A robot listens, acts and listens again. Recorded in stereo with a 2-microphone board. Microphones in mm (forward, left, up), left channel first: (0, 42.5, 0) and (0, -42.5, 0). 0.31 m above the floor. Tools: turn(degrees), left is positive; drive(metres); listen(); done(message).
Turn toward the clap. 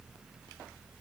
listen()
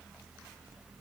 listen()
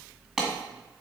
turn(degrees=-30)
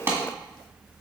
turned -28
turn(degrees=-145)
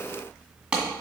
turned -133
turn(degrees=-10)
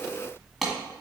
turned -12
done("Facing the clap, 1 to 2 m away.")